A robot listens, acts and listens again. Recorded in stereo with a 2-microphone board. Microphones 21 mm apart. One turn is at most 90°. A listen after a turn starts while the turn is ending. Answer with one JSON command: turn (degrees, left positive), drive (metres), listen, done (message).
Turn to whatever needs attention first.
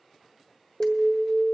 {"turn": -35}
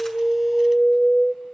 {"done": "Facing the alarm, 1 to 2 m away."}